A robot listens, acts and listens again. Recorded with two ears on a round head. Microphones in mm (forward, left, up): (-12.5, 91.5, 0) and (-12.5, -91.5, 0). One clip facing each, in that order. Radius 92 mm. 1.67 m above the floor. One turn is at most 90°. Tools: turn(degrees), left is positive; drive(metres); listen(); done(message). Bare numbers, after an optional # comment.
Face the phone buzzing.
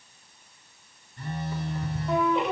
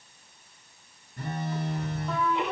# The phone buzzing: about 40° right or 140° right.
turn(-40)
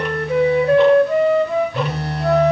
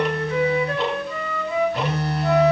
done("Found it: a phone buzzing, straight ahead, over 4 m away.")